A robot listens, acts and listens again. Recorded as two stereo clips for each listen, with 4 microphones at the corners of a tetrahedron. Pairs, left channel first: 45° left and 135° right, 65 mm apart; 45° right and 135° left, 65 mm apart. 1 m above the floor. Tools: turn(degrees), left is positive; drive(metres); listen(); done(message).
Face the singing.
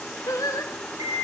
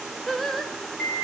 turn(degrees=40)
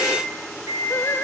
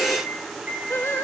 listen()
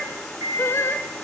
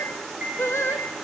done("Facing the singing.")